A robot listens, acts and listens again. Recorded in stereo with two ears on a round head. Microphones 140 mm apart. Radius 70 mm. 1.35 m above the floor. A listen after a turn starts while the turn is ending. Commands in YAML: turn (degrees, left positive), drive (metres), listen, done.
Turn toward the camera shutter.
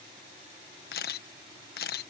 turn: 70
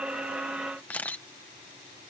turn: 10
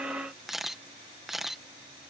done: "Facing the camera shutter."